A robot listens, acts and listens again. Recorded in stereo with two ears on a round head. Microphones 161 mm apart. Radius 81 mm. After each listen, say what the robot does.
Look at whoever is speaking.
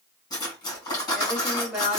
Turn 30° right.
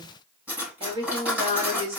Turn 140° right.
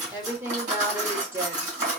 Turn 15° right.
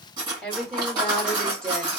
Found it: a woman speaking, straight ahead, 2 to 4 m away.